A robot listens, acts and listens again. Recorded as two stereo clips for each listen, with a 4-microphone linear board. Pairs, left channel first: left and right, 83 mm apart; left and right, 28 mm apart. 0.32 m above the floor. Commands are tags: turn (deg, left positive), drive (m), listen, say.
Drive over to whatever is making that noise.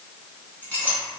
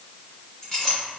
<turn deg="15"/>
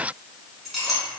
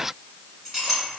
<drive m="1.0"/>
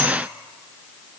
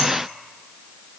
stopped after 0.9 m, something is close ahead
<listen/>
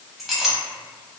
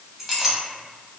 <say>Arrived at the clink, straight ahead.</say>